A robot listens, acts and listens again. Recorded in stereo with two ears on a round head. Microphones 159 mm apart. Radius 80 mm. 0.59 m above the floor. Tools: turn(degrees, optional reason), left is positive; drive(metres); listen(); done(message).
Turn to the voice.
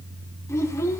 turn(degrees=20, reason="The child speaking: about 20° left or 160° left.")
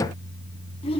turn(degrees=145, reason="So it is at 145° left.")
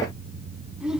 done("Found it: a child speaking, straight ahead.")